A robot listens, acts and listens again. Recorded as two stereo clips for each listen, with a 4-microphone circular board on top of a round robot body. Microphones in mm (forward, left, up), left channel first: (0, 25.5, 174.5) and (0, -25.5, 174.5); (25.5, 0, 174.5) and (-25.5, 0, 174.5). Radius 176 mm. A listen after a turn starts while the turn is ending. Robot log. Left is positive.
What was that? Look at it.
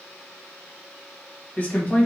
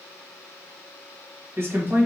note: The man speaking: 145° left.
cmd yaw +145
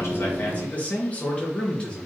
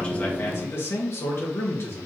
note: The man speaking is now 25° left.
cmd yaw +25
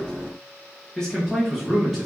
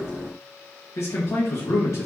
end: Facing the man speaking.